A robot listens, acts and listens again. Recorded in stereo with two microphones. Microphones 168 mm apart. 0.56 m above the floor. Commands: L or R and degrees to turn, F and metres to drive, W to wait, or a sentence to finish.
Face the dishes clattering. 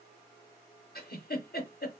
W
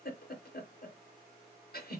W
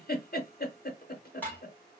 L30
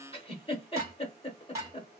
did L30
R20
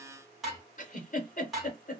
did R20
Facing the dishes clattering, 1 to 2 m away.